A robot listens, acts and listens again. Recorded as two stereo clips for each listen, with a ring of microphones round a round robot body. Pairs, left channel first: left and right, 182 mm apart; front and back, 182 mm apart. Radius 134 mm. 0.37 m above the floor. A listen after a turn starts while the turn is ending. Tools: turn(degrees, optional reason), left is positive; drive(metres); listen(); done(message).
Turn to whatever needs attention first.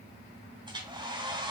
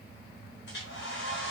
listen()
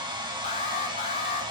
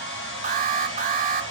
turn(degrees=145, reason="The alarm: 145° left.")
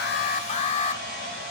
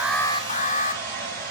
turn(degrees=40, reason="The alarm is now 40° left.")
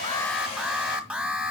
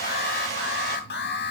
turn(degrees=-10, reason="The alarm is now 10° right.")
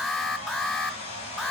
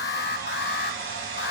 done("Facing the alarm, 1 to 2 m away.")